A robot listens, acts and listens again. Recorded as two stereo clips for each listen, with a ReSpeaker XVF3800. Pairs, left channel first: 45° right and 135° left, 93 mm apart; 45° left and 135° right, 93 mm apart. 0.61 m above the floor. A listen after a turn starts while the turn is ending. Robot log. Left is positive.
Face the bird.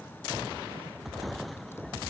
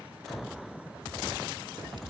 cmd idle
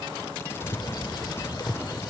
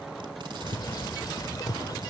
end: Found it: a bird, straight ahead.